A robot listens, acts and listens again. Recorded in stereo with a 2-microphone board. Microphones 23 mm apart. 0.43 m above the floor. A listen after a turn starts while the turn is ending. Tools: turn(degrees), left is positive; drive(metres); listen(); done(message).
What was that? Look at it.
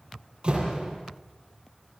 turn(degrees=-45)
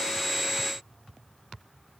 listen()
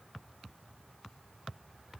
done("I heard a door slam, but can't make it out now. It was about straight ahead or 90° right.")